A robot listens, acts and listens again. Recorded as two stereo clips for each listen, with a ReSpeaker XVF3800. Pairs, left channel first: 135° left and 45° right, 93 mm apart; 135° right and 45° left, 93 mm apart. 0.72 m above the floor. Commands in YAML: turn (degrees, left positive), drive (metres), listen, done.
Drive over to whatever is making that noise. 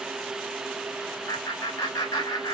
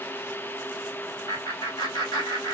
turn: 180
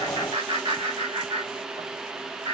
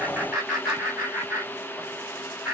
turn: -35
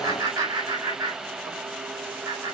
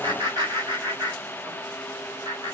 drive: 1.0
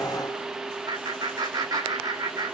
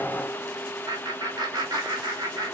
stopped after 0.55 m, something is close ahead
done: "Something is in my way. I am facing the laughter but have not reached it."